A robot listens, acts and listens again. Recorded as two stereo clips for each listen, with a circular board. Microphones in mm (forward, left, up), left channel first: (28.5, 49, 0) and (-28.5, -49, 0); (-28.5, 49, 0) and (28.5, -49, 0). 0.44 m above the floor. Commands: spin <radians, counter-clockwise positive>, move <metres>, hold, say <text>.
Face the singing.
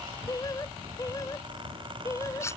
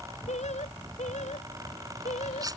spin 2.09
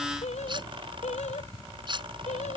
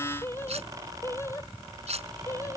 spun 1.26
spin 0.96
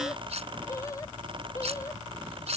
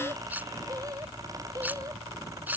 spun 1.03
say Found it: singing, straight ahead.